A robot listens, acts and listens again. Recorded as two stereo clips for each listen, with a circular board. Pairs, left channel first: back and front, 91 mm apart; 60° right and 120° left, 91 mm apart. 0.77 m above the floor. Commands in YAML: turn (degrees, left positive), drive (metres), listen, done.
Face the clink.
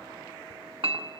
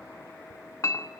done: "Found it: a clink, straight ahead, under 1 m away."